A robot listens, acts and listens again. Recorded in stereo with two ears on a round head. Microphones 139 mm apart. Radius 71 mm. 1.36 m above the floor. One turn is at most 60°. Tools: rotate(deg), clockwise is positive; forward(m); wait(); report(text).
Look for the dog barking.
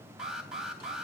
wait()
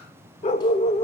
rotate(-40)
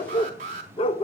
rotate(-35)
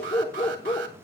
rotate(-35)
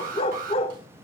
rotate(-40)
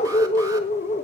rotate(-45)
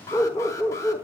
rotate(-20)
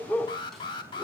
rotate(-10)
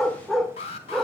report("Facing the dog barking, 1 to 2 m away.")